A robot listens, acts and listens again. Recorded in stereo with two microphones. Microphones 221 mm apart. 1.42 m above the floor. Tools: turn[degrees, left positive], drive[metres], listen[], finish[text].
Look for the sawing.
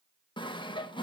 Thought: The sawing: about 20° left or 160° left.
Action: turn[20]
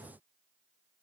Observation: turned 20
Action: listen[]
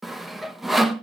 Action: finish[Found it: sawing, straight ahead, 1 to 2 m away.]